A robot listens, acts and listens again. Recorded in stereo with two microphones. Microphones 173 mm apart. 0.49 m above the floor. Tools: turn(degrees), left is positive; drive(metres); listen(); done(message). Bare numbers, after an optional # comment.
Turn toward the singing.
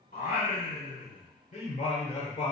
# The singing: about 35° left or 145° left.
turn(35)
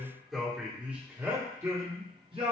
# So it is at 35° right.
turn(-35)
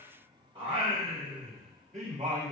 # The singing is now 40° right.
turn(-40)
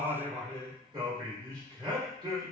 # The singing is now 25° right.
turn(-25)
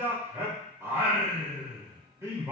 # The singing is now 15° right.
turn(-15)
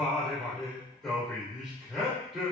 done("Found it: singing, straight ahead, 1 to 2 m away.")